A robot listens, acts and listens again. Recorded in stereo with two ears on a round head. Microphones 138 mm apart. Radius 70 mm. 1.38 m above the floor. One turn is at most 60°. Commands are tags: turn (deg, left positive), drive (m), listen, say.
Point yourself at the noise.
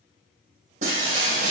<turn deg="-50"/>
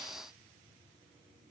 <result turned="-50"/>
<listen/>
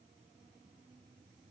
<say>I heard breaking glass, but can't make it out now. It was about straight ahead or 80° right.</say>